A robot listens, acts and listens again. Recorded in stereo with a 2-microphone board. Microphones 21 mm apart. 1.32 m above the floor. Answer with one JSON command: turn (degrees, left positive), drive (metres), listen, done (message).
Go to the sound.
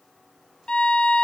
{"turn": 55}
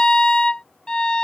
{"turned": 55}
{"turn": 55}
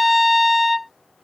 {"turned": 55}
{"drive": 1.0}
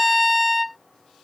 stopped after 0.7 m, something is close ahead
{"done": "Arrived at the violin, straight ahead."}